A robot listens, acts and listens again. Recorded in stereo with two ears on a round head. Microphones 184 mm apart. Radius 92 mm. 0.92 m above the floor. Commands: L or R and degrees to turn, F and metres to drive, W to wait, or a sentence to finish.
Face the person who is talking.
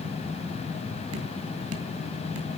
W
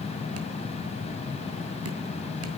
W
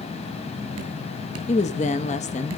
L35
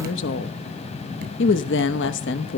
L110
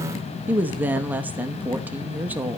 R10
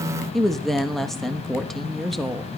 Facing the woman speaking, 1 to 2 m away.